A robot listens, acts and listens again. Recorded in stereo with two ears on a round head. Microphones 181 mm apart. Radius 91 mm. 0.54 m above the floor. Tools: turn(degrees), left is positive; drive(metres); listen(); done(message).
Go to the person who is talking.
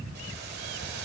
listen()
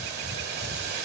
listen()
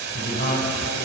turn(degrees=50)
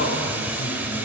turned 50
turn(degrees=70)
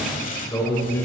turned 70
turn(degrees=15)
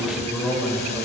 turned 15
drive(metres=1.0)
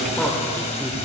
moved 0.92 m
turn(degrees=10)
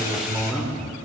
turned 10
drive(metres=1.0)
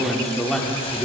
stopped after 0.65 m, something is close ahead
done("Arrived at the man speaking, straight ahead.")